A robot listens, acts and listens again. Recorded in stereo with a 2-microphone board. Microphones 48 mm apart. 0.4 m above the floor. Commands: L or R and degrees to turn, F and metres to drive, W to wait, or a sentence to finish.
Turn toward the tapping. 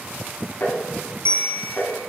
L45
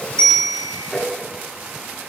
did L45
Facing the tapping.